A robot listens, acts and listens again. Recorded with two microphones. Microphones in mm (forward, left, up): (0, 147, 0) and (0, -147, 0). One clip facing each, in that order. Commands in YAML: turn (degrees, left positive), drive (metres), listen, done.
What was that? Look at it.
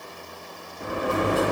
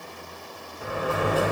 turn: 50
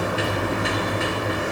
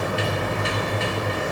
turn: 75
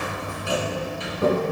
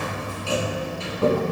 turn: 20
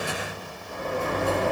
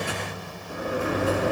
done: "Facing the sliding door."